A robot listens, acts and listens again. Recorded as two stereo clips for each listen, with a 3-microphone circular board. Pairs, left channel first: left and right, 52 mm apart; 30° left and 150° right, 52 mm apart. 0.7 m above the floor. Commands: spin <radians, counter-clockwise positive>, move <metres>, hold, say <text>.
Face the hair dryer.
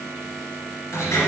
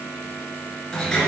hold
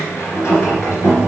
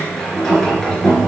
hold
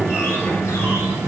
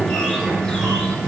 say I can't make out a hair dryer, only a sliding door.